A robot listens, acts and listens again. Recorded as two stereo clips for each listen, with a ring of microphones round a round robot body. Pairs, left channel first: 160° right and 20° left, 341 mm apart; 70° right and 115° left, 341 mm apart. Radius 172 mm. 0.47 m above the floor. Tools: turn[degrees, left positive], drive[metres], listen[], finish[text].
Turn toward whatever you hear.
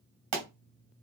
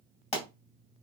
Action: finish[Found it: a pop, straight ahead.]